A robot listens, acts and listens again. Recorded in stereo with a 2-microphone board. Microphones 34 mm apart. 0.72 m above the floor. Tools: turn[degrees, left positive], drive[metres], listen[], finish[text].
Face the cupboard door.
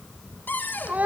Thought: The cupboard door: about 70° left or 110° left.
Action: turn[70]
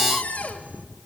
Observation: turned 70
Thought: So it is at 45° left.
Action: turn[45]
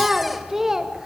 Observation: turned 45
Action: listen[]
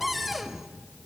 Action: finish[Found it: a cupboard door, straight ahead, 1 to 2 m away.]